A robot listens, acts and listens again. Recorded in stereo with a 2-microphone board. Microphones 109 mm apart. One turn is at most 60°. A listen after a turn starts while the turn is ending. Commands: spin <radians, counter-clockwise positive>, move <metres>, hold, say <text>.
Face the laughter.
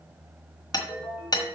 hold
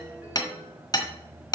hold
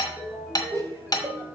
spin -0.61
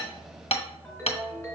hold
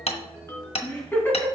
spin 0.35
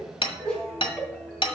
say Found it: laughter, straight ahead.